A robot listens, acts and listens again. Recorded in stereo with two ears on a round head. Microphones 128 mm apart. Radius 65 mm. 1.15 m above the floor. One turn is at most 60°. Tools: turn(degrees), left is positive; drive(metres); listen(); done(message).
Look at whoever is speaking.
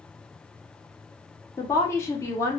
turn(degrees=20)
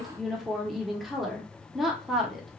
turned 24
done("Found it: a woman speaking, straight ahead, under 1 m away.")